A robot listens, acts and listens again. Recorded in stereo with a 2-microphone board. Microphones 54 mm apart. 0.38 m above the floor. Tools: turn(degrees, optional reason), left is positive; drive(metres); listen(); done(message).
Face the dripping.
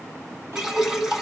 turn(degrees=-30)
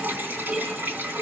turn(degrees=-135, reason="So it is at 135° right.")
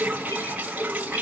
turn(degrees=-30, reason="The dripping is now 30° right.")
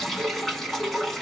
done("Found it: dripping, straight ahead.")